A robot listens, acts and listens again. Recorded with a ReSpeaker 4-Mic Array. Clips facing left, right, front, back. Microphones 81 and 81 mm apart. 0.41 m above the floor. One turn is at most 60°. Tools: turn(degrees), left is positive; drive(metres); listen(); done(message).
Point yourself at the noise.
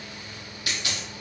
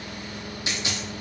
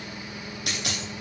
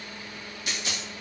turn(degrees=-25)
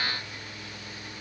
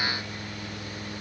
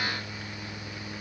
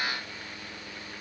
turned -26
done("I heard a dropped coin from this way, but can't make it out now.")